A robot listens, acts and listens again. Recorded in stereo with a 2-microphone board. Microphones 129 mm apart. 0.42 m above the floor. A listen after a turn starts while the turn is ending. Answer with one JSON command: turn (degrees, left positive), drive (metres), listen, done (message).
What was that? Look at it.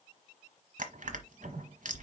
{"turn": -75}
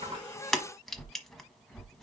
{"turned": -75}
{"done": "Facing the crushing."}